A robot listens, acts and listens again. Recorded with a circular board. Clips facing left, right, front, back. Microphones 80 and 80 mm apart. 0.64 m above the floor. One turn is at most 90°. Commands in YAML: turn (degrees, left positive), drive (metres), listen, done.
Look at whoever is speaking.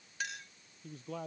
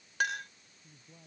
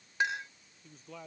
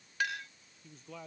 turn: 90
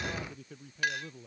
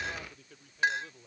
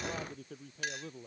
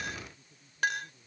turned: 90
done: "Found it: a man speaking, straight ahead."